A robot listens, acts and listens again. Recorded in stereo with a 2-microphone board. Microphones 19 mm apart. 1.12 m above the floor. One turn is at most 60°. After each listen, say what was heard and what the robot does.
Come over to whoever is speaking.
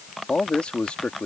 Turn 60° left.
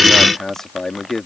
So it is at 25° left. Turn 25° left.
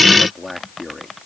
Drive 1.0 m forward.
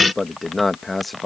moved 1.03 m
Drive 1.0 m forward.
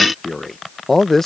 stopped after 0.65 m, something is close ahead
The man speaking is now 15° left. Turn 15° left.
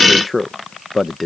I am next to the man speaking.